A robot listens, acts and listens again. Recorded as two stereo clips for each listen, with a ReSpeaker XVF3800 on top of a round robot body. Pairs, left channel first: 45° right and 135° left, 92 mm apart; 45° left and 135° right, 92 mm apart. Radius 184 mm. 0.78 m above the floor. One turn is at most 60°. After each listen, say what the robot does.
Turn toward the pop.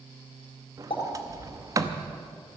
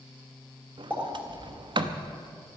Turn 60° right.
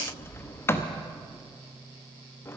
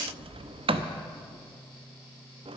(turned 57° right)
Turn 10° right.
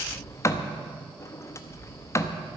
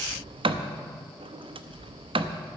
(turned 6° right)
Facing where the pop came from. I can't hear it now.